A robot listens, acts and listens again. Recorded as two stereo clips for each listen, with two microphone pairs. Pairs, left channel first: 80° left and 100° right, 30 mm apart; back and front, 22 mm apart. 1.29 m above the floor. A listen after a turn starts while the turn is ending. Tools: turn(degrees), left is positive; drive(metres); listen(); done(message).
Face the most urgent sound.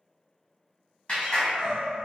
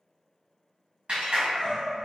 turn(degrees=180)
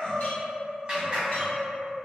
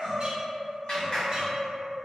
done("Facing the crying, 1 to 2 m away.")